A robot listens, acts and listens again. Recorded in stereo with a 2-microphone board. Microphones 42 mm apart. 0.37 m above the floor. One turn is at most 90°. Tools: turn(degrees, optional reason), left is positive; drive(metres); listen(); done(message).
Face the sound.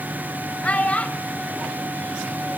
turn(degrees=30, reason="The child speaking: about 30° left or 150° left.")
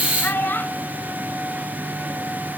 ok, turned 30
turn(degrees=90, reason="So it is at 115° left.")
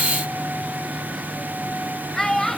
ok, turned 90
turn(degrees=15, reason="The child speaking is now 15° left.")
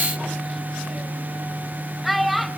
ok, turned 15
done("Found it: a child speaking, straight ahead, under 1 m away.")